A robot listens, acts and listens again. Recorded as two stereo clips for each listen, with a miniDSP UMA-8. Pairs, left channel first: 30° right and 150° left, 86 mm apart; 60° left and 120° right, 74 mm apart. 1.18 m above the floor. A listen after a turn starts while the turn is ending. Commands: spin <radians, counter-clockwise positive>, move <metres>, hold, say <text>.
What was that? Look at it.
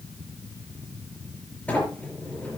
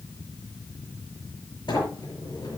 spin 0.70
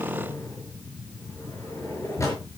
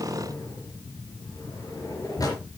spin 0.44
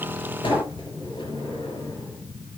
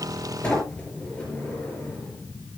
spin -0.26
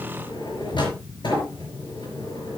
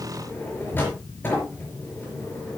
say Found it: a sliding door, straight ahead, over 4 m away.